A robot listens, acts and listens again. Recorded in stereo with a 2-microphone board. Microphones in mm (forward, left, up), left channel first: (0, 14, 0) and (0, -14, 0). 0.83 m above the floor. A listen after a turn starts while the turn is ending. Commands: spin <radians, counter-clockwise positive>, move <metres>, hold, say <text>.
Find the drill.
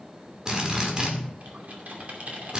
spin -0.44
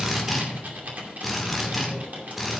say Facing the drill.